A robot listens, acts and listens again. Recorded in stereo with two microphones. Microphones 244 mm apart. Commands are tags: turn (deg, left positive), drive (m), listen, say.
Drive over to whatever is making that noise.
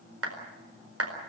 <turn deg="-70"/>
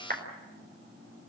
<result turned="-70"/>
<turn deg="-40"/>
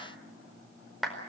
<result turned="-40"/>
<drive m="1.0"/>
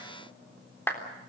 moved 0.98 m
<turn deg="10"/>
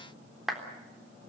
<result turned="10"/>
<drive m="1.0"/>
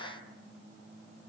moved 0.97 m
<listen/>
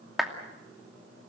<drive m="1.0"/>
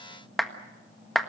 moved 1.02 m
<drive m="1.0"/>
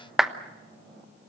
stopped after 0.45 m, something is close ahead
<say>Arrived at the clap, straight ahead.</say>